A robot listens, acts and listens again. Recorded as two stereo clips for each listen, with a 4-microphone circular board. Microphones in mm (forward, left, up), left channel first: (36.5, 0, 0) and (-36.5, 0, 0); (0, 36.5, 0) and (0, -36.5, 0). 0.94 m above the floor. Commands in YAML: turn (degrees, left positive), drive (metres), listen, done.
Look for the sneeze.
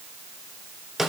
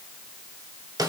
listen: true
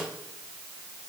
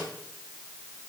listen: true
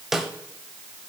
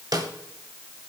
done: "I can't make out a sneeze to turn to."